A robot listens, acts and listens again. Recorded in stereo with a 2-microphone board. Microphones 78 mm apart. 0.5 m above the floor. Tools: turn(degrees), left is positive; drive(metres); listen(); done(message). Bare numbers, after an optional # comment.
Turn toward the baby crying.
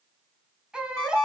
turn(-30)
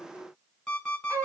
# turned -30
# So it is at 140° right.
turn(-140)
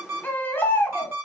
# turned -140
# The baby crying is now 20° left.
turn(20)
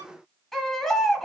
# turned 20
done("Found it: a baby crying, straight ahead, 1 to 2 m away.")